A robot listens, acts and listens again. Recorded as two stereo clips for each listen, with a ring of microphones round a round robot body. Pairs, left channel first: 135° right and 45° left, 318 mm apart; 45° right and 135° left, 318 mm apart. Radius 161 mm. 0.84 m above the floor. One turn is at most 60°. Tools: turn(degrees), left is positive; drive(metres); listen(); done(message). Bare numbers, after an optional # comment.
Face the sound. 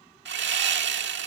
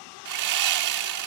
# The sawing: 100° left.
turn(60)
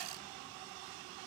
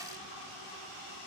# Nothing new. It was at 40° left.
turn(40)
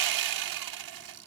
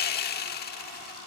# The sawing is now 15° left.
turn(15)
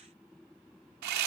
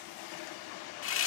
done("Found it: sawing, straight ahead.")